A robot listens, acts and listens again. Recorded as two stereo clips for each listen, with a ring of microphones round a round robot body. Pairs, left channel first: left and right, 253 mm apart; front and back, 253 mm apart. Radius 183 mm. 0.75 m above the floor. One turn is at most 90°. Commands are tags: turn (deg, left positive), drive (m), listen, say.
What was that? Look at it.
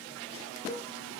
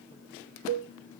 <turn deg="90"/>
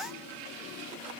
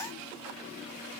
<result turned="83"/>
<turn deg="90"/>
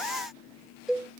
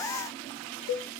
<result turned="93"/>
<say>Found it: a cowbell, straight ahead.</say>